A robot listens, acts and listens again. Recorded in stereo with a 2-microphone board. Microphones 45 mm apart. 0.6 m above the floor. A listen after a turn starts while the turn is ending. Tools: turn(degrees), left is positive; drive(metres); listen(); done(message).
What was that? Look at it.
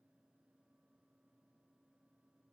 listen()
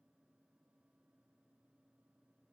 listen()
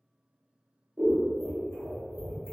turn(degrees=-60)
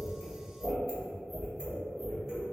turn(degrees=-15)
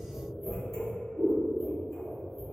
done("Facing the scissors.")